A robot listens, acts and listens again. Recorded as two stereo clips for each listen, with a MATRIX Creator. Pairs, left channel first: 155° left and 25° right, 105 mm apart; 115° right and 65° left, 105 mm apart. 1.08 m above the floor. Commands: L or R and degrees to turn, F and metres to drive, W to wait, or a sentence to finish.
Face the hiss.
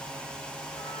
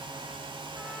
W
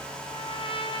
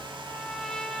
W
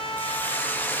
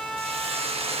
L85
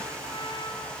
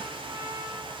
W
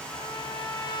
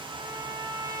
W
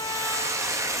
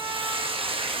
L35
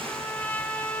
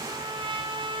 W
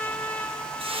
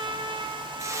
Found it: a hiss, straight ahead.